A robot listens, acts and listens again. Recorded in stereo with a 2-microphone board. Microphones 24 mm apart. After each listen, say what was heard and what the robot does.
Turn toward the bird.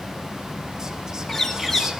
Turn 30° left.
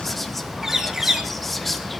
So it is at 20° right. Turn 20° right.
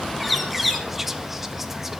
Facing the bird, 2 to 4 m away.